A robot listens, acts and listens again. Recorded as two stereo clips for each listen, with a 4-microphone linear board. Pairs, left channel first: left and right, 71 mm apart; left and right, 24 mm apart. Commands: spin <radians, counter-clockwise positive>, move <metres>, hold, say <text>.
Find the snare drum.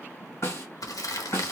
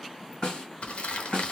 spin 0.70
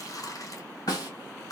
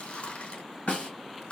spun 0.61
spin 1.83
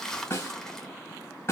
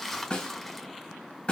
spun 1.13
spin 0.70
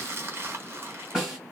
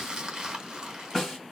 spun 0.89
spin -0.17
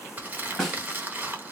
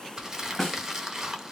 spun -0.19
say Found it: a snare drum, straight ahead, 1 to 2 m away.